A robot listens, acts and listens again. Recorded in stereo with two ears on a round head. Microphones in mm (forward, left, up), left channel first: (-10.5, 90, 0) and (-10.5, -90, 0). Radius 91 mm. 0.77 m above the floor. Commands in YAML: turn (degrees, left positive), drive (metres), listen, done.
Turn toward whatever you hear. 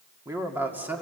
turn: -30
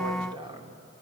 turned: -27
turn: -155
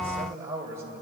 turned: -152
turn: -15
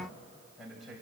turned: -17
done: "Found it: a man speaking, straight ahead."